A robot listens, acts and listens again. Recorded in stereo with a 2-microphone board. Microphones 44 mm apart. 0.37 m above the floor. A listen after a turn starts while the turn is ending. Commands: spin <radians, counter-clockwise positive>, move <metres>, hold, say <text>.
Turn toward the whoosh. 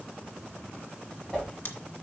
spin 0.35
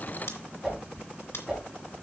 say Facing the whoosh, 2 to 4 m away.